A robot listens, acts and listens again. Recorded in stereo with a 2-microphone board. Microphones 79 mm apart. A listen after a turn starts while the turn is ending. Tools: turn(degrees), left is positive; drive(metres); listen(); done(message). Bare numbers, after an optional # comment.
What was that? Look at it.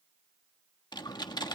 # The typing on a keyboard: about 65° left or 115° left.
turn(65)
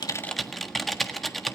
done("Found it: typing on a keyboard, straight ahead, 1 to 2 m away.")